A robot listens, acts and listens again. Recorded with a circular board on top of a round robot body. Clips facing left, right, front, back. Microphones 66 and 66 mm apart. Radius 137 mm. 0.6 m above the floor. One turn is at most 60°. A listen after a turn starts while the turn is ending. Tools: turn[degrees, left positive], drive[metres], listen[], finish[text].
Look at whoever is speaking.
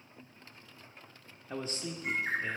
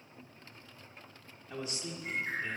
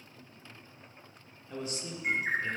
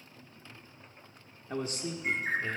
Thought: The man speaking: 135° left.
Action: turn[60]
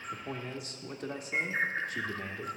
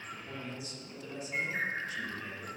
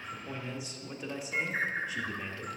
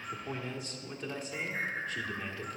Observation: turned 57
Thought: The man speaking is now 80° left.
Action: turn[60]
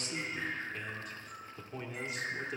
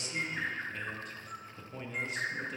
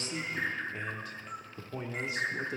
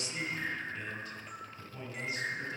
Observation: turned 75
Action: finish[Found it: a man speaking, straight ahead.]